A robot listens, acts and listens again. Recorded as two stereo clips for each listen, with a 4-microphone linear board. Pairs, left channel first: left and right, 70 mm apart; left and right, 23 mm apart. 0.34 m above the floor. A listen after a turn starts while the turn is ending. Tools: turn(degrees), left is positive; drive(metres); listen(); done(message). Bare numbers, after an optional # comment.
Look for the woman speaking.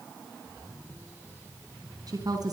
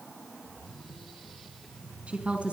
# The woman speaking: about 70° right or 110° right.
turn(-70)
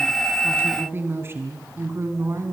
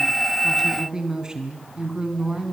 # So it is at 45° right.
turn(-45)
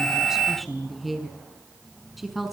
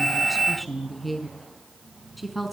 done("Found it: a woman speaking, straight ahead.")